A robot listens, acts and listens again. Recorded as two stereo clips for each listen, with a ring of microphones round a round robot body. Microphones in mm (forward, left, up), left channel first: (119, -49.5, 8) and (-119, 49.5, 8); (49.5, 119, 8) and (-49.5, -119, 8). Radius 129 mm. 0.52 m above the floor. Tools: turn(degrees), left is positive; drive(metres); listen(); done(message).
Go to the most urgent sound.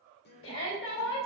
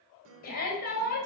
turn(degrees=15)
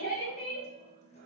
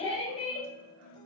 drive(metres=1.0)
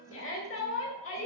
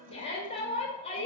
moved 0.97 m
drive(metres=1.0)
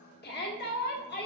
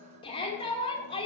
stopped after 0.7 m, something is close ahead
done("I am next to the shout.")